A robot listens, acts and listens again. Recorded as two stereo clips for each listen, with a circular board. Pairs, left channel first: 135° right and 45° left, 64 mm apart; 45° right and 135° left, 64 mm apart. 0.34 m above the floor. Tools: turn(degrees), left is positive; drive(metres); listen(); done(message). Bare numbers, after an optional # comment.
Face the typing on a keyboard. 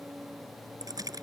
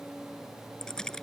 # The typing on a keyboard: 35° left.
turn(35)
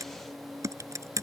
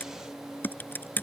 # The typing on a keyboard is now 15° left.
turn(15)
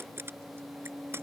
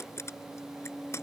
done("Found it: typing on a keyboard, straight ahead.")